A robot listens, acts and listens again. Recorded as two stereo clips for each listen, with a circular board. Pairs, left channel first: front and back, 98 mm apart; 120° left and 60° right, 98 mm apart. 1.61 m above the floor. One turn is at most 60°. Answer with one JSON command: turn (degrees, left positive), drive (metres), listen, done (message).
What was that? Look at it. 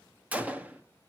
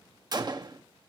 {"turn": -60}
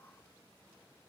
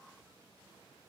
{"turn": -45}
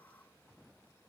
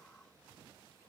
{"done": "Facing where the gunshot came from. I can't hear it now."}